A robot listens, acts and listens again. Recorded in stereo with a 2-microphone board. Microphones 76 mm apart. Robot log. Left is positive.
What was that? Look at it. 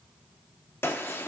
note: The gunshot: about 30° left or 150° left.
cmd yaw +30
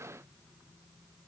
cmd idle
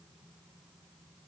end: I heard a gunshot, but can't make it out now. It was about straight ahead or 120° left.